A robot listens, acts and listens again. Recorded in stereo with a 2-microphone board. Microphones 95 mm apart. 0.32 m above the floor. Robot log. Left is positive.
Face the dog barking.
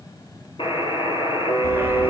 note: The dog barking: about 20° right or 160° right.
cmd yaw -20
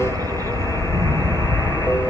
note: The dog barking: about 20° right or 160° right.
cmd yaw -20
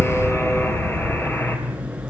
cmd yaw -30
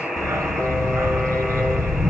note: The dog barking: about 30° right or 150° right.
cmd yaw -30
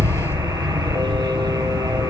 note: So it is at 120° right.
cmd yaw -120
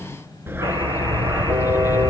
note: The dog barking is now 25° right.
cmd yaw -25
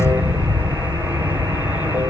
note: The dog barking is now 15° right.
cmd yaw -15
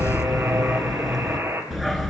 end: Facing the dog barking.